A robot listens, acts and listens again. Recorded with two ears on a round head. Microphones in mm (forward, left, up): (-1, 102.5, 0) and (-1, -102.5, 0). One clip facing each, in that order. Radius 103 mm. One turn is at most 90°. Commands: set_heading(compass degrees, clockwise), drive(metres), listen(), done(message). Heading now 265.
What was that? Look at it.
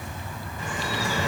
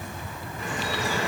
set_heading(190)
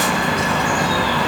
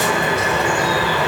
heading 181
set_heading(191)
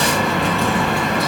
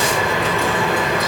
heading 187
done("Facing the dripping, over 4 m away.")